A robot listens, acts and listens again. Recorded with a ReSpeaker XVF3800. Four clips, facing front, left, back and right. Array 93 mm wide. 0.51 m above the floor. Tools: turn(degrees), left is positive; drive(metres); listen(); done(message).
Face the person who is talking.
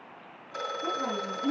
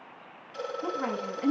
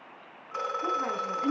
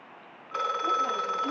turn(degrees=115)
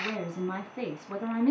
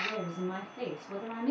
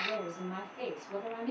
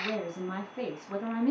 turn(degrees=-10)
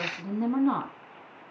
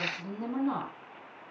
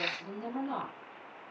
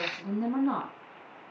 done("Found it: a woman speaking, straight ahead, over 4 m away.")